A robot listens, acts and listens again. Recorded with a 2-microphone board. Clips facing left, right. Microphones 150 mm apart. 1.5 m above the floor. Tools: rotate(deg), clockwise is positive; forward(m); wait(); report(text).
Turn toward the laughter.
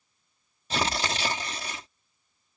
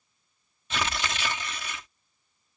wait()
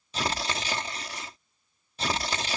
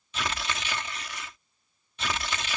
wait()
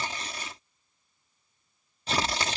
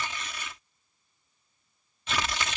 report("I can't make out laughter, only tearing paper.")